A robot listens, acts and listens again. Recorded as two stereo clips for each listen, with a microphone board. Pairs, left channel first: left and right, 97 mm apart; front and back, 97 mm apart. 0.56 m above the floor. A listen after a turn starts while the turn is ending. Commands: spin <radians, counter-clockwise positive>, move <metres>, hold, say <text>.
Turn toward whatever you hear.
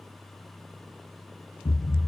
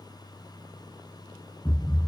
spin 1.48
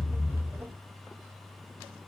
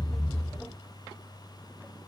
say Facing the thud, 1 to 2 m away.